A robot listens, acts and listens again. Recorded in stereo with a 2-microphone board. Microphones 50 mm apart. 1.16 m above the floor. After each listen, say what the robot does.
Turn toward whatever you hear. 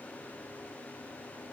Keep listening.
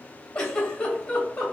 Turn 20° left.
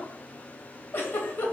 Turn 135° left.
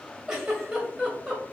Turn 15° right.
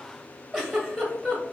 Facing the giggle.